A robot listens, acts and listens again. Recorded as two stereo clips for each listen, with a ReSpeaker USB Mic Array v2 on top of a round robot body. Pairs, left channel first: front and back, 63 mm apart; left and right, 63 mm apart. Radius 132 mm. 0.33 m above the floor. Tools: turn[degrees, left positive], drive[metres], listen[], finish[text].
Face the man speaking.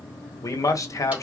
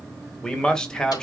Thought: The man speaking: 15° left.
Action: turn[15]
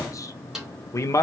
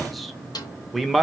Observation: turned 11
Action: finish[Found it: a man speaking, straight ahead, 1 to 2 m away.]